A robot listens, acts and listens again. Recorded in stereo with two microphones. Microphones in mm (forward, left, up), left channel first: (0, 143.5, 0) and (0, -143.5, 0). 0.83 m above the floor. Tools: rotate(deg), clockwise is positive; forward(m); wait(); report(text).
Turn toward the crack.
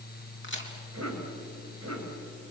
rotate(-40)
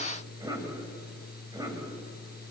wait()
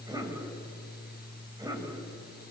report("I heard a crack, but can't make it out now. It was about straight ahead or 100° left.")